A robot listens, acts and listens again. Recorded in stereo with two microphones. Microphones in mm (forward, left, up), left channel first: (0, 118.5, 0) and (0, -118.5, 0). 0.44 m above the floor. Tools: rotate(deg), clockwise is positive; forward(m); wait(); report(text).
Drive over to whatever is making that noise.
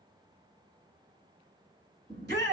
rotate(50)
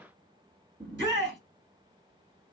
rotate(70)
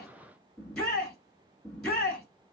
forward(1.0)
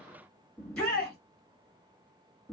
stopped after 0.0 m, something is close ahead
report("Blocked. The shout is further on, straight ahead.")